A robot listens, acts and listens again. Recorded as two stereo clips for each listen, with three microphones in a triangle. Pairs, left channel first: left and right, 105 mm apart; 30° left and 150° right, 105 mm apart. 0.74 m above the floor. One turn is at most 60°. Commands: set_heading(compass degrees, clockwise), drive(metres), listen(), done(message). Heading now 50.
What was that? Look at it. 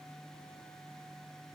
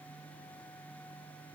listen()
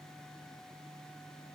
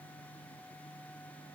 listen()
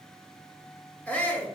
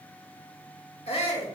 set_heading(35)
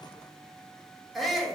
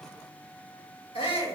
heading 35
done("Found it: a shout, straight ahead, 1 to 2 m away.")